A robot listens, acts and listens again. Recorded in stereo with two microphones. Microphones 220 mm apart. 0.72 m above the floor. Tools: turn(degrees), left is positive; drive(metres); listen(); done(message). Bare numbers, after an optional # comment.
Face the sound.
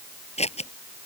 # The scissors: about 30° left or 150° left.
turn(30)
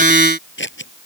# So it is at 120° left.
turn(120)
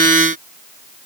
listen()
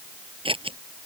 # The scissors is now 25° right.
turn(-25)
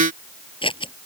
# The scissors is now 25° left.
turn(25)
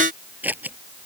# The scissors is now 10° right.
turn(-10)
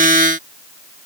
listen()
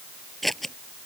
done("Facing the scissors.")